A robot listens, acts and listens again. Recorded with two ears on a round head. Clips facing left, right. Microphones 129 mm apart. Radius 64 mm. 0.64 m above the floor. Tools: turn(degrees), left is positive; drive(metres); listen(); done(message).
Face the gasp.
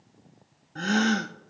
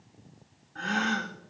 turn(degrees=45)
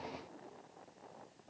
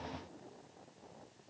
listen()
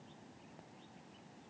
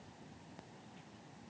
done("I heard a gasp, but can't make it out now. It was about straight ahead or 90° left.")